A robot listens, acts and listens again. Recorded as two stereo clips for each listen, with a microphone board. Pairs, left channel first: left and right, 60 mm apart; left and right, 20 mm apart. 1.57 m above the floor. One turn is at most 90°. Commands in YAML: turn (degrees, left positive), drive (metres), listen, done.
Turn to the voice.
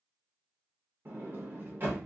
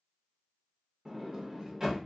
listen: true
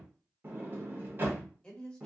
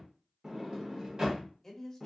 turn: 30
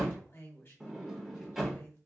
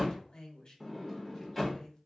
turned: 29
turn: 90
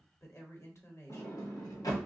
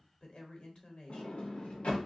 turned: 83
turn: 50
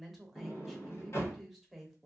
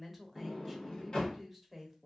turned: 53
done: "Facing the woman speaking, 1 to 2 m away."